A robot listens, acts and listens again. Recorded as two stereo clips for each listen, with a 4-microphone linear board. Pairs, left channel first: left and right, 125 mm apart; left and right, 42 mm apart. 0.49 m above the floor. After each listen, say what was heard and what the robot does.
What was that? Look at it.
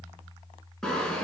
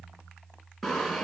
Turn 30° left.
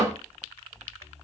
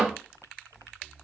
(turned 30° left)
So it is at 25° right. Turn 25° right.
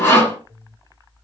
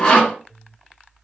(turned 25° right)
The sawing is now 20° left. Turn 20° left.
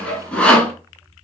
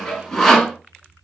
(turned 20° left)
The sawing is now 10° left. Turn 10° left.
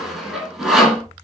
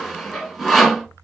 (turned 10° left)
Found it: sawing, straight ahead, 1 to 2 m away.